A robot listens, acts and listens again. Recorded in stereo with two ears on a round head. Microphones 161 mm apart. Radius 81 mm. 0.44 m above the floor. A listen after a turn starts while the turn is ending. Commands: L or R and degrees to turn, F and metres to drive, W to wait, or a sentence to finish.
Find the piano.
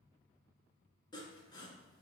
W
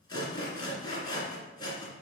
W
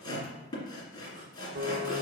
R60
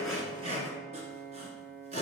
R50
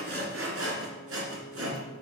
Found it: a piano, straight ahead, under 1 m away.